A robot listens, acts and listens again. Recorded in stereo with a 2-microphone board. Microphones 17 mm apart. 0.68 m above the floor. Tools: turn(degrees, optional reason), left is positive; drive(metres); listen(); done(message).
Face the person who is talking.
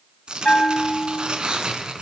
listen()
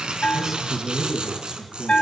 turn(degrees=-20, reason="The man speaking: about 20° right or 160° right.")
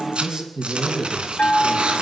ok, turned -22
turn(degrees=-135, reason="So it is at 135° right.")
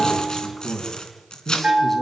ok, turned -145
turn(degrees=10, reason="The man speaking is now 10° left.")
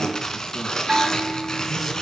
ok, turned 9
listen()
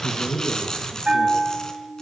done("Found it: a man speaking, straight ahead, over 4 m away.")